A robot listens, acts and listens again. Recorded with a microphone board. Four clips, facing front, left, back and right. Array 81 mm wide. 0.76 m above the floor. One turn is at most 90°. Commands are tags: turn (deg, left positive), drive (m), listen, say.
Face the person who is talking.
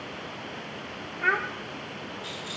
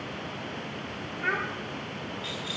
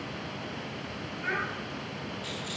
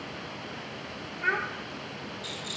<say>Facing the child speaking, under 1 m away.</say>